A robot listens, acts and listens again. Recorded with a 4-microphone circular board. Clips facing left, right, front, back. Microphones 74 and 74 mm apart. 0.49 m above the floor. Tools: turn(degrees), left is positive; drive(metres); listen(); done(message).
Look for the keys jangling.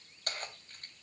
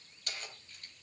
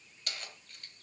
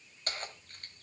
turn(degrees=135)
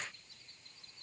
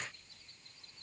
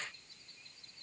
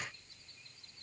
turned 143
turn(degrees=-10)
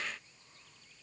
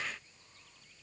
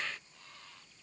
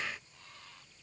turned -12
listen()
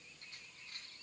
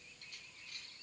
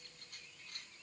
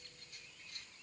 turn(degrees=30)
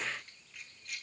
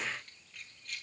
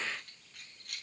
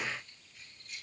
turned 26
done("Found it: keys jangling, straight ahead.")